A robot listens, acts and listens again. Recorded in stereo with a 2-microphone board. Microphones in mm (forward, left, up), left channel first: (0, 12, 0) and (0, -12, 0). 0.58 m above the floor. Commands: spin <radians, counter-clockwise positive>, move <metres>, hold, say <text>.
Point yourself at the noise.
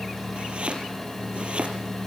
spin -1.05
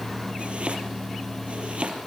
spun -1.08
spin -1.05
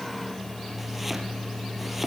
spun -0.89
hold
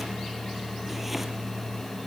hold
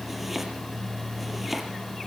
say Found it: chopping, straight ahead.